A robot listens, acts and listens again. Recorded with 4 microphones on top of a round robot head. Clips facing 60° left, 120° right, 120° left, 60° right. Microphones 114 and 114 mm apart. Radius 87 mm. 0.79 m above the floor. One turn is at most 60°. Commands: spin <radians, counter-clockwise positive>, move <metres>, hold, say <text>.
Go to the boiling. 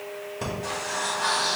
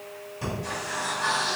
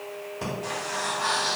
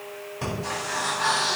hold
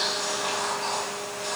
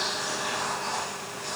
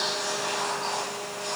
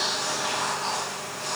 hold
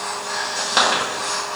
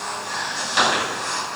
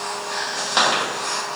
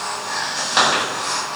say I can't make out boiling to turn to.